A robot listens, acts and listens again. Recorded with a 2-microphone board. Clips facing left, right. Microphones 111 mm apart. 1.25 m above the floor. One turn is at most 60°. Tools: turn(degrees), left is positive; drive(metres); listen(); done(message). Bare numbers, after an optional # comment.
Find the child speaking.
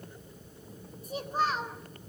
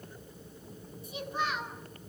# The child speaking: about 35° left or 145° left.
turn(35)
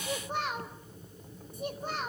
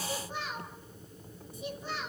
# The child speaking: about 50° left or 130° left.
turn(50)
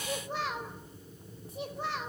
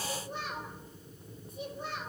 # So it is at 80° left.
turn(60)
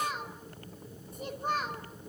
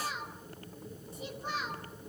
# The child speaking is now 50° left.
turn(50)
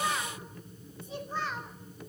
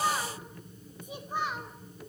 # The child speaking is now 15° right.
turn(-15)
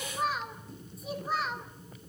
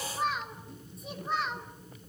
done("Facing the child speaking, 2 to 4 m away.")